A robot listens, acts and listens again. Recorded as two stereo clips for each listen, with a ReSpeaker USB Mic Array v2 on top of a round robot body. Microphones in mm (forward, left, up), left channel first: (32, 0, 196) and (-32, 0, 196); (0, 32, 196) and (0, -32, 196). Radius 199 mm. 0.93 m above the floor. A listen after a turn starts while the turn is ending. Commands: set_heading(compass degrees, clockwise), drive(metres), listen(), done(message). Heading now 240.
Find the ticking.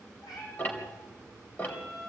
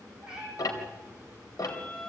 set_heading(175)
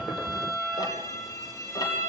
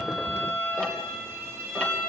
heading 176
listen()
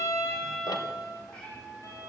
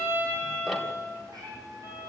listen()
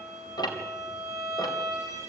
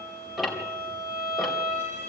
done("Facing the ticking, 2 to 4 m away.")